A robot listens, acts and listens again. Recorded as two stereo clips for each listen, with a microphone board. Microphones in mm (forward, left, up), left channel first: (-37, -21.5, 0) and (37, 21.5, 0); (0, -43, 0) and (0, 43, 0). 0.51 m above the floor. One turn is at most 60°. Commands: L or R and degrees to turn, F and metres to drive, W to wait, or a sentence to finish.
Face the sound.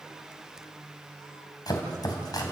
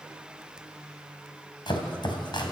R60
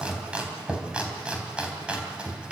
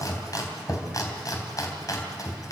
R45
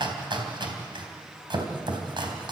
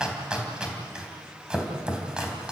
L10
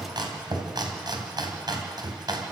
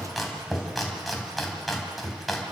Facing the chopping.